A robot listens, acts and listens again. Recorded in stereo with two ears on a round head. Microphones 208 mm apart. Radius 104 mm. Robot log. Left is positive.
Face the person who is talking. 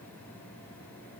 cmd idle
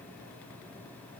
cmd idle
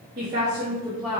cmd yaw +30
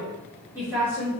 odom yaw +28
cmd yaw -30
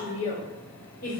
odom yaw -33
note: So it is at 40° left.
cmd yaw +40
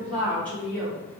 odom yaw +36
end: Facing the woman speaking, 2 to 4 m away.